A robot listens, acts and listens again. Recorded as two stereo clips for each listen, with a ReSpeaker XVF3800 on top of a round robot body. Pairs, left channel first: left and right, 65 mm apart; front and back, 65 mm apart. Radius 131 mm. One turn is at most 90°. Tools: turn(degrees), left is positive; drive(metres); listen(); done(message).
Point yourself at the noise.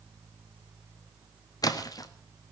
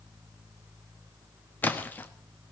turn(degrees=65)
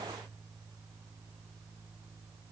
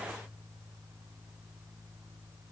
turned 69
done("Facing where the splash came from. I can't hear it now.")